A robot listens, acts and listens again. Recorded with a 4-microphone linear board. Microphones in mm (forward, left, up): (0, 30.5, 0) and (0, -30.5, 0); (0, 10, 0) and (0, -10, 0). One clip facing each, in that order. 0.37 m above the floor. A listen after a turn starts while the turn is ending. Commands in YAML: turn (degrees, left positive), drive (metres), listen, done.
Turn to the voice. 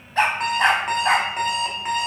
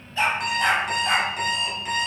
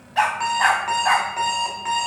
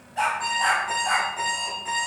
listen: true
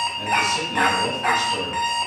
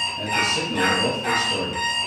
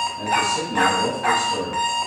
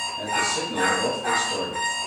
turn: -55
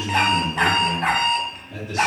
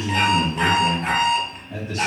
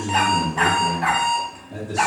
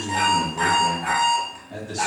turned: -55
turn: -30
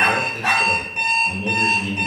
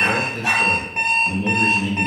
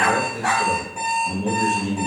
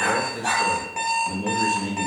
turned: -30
turn: -10
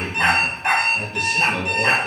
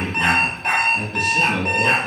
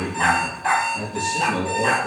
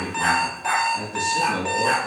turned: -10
done: "Found it: a man speaking, straight ahead."